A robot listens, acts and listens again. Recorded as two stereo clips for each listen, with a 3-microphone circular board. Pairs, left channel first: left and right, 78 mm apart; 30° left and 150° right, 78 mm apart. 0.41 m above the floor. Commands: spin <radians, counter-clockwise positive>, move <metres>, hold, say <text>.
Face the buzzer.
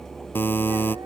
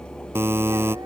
spin 2.71
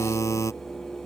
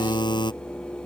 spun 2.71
spin 0.70
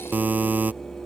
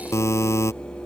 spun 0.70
spin -0.35
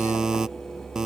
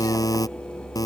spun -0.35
say Found it: a buzzer, straight ahead.